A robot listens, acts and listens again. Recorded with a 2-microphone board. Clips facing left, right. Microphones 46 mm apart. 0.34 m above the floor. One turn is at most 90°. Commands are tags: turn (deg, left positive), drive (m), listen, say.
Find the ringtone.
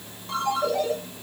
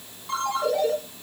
<turn deg="-30"/>
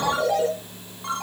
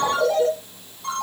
<turn deg="25"/>
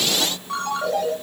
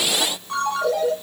<say>Facing the ringtone, over 4 m away.</say>